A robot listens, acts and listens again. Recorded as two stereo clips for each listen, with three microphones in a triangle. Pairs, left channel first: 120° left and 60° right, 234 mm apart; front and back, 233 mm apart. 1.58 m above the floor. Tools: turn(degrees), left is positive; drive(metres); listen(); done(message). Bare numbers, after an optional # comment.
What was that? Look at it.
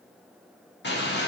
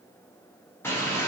# The bird: 80° left.
turn(80)
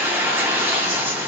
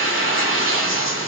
# The bird is now 25° left.
turn(25)
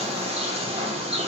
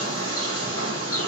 # The bird is now 10° left.
turn(10)
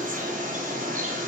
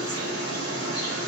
done("Facing the bird.")